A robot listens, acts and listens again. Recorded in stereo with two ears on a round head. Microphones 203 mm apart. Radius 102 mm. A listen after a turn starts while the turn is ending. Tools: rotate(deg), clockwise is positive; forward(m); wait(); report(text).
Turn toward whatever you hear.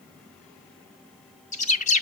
rotate(-35)
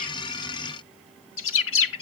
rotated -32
rotate(-115)
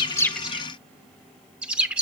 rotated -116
report("Found it: a bird, straight ahead, 1 to 2 m away.")